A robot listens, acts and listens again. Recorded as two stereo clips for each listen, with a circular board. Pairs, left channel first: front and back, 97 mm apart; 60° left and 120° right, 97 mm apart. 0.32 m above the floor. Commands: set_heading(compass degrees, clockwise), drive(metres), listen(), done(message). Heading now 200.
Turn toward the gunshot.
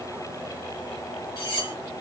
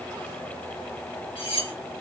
listen()
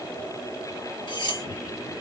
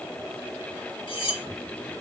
listen()
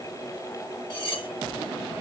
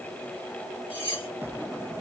done("I can't make out a gunshot to turn to.")